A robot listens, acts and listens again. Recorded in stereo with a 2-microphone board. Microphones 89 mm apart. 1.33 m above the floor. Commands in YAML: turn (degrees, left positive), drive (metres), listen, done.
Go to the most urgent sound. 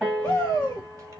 turn: 50
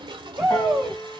drive: 1.0
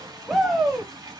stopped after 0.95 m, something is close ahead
done: "I am next to the shout."